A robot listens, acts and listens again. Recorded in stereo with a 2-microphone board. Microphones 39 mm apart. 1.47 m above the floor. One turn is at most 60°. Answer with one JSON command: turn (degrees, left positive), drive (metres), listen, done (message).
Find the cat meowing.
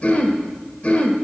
{"listen": true}
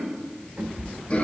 {"turn": -50}
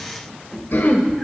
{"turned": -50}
{"done": "Found it: a cat meowing, straight ahead."}